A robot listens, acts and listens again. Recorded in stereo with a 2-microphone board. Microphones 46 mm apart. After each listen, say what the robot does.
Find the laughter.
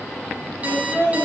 Turn 55° left.
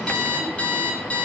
Keep listening.
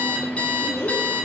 Turn 60° left.
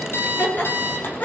Turn 35° left.
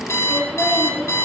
Found it: laughter, straight ahead.